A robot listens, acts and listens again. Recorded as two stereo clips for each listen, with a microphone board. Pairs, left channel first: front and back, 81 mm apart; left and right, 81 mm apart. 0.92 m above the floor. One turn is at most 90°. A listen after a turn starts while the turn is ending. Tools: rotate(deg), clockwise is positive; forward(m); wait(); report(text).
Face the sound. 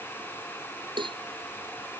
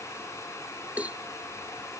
rotate(90)
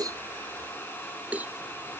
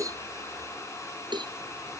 rotate(90)
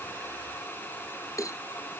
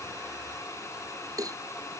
rotate(50)
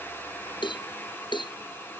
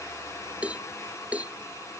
rotate(15)
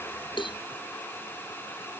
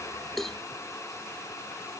report("Found it: a cowbell, straight ahead.")